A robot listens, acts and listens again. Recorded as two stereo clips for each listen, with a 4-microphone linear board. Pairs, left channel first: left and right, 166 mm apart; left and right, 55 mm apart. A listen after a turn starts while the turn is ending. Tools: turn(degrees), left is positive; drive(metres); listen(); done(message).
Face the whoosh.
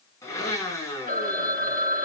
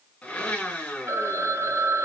listen()
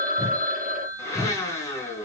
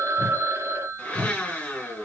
turn(degrees=-30)
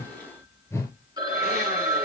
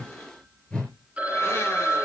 turn(degrees=15)
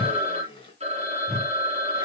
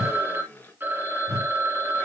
done("Found it: a whoosh, straight ahead, 2 to 4 m away.")